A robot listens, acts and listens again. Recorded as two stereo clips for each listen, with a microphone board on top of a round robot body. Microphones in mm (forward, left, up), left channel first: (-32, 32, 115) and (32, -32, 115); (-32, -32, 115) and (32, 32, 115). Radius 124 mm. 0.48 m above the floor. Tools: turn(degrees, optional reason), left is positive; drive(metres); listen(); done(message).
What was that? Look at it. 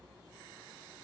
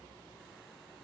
listen()
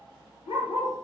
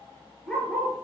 turn(degrees=145, reason="The dog barking: 145° left.")
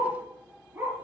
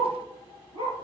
turn(degrees=25, reason="The dog barking is now 25° left.")
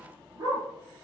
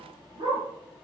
done("Facing the dog barking.")